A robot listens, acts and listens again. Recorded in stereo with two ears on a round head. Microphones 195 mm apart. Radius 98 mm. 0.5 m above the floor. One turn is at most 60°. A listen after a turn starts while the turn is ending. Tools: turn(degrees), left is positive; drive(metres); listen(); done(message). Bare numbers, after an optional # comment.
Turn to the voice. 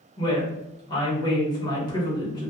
# The woman speaking: about 20° left or 160° left.
turn(20)
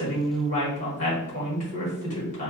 # So it is at 135° left.
turn(60)
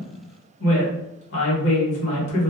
# The woman speaking is now 95° left.
turn(60)
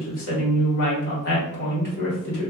# The woman speaking is now 65° left.
turn(60)
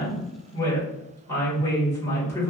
# The woman speaking is now 15° left.
turn(15)
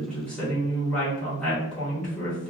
done("Facing the woman speaking.")